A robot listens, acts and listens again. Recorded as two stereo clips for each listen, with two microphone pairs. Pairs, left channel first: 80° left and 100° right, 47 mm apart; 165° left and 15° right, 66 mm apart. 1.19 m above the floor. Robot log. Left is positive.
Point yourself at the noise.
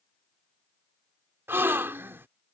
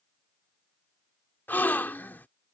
note: The gasp: 135° right.
cmd yaw -135
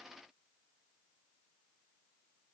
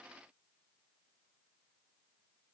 end: I heard a gasp from this way, but can't make it out now.